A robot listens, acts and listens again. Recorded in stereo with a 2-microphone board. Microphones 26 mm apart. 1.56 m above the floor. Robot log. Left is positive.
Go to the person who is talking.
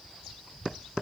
cmd idle
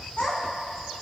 note: The child speaking: about 50° left or 130° left.
cmd yaw +50
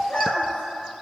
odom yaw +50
note: So it is at 75° left.
cmd yaw +75
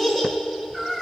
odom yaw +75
cmd fwd 1.0
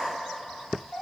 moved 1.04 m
note: The child speaking is now 15° left.
cmd yaw +15
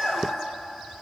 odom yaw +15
cmd fwd 1.0
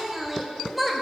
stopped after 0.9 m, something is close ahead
end: I am next to the child speaking.